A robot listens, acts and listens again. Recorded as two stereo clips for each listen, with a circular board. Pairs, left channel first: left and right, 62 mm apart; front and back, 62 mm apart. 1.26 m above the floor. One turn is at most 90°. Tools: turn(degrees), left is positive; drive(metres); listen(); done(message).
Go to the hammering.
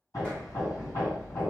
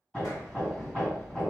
turn(degrees=70)
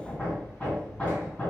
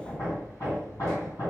turn(degrees=20)
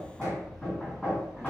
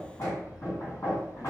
turn(degrees=10)
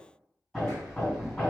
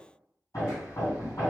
drive(metres=1.0)
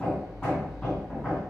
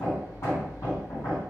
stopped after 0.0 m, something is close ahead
done("Something is in my way. I am facing the hammering but have not reached it.")